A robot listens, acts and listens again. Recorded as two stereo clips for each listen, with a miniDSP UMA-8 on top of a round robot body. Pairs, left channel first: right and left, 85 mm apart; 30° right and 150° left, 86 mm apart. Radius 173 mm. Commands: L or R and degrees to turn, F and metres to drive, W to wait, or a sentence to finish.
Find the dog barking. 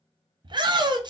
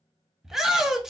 W
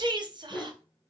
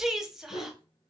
Facing the dog barking, 1 to 2 m away.